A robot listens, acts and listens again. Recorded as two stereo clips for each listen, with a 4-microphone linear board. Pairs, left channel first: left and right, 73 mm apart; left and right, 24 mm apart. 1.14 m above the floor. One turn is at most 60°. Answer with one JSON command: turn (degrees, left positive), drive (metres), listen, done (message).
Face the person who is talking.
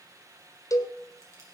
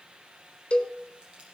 {"listen": true}
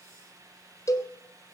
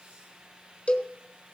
{"listen": true}
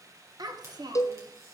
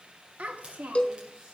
{"turn": -60}
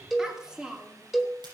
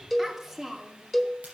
{"turn": -10}
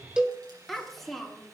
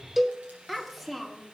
{"done": "Found it: a child speaking, straight ahead."}